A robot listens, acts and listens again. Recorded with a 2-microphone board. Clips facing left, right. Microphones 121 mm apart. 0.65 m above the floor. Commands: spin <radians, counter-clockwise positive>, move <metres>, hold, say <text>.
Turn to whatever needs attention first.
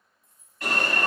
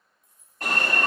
spin -0.79
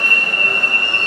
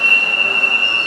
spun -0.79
spin -1.40
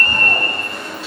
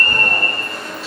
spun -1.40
say Facing the alarm.